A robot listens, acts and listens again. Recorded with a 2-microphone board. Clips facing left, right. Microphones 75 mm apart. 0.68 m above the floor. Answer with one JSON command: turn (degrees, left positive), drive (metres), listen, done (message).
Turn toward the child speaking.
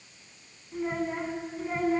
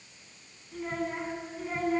{"turn": 30}
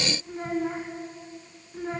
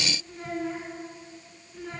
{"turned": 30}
{"turn": 160}
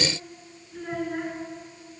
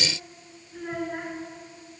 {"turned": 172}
{"done": "Facing the child speaking, over 4 m away."}